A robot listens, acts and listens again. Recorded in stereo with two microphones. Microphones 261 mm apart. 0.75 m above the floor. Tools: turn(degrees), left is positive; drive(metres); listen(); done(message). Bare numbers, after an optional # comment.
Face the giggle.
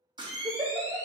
# The giggle: about 30° right or 150° right.
turn(-30)
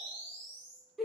done("Facing the giggle, under 1 m away.")